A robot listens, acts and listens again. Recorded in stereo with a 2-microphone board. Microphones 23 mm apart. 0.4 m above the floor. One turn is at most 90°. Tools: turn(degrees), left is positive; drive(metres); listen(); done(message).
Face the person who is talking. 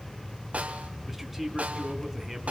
turn(degrees=-30)
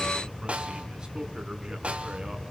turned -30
listen()
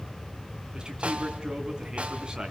turn(degrees=-90)
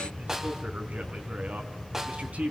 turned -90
turn(degrees=-90)
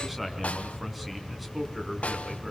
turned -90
done("Facing the man speaking, 2 to 4 m away.")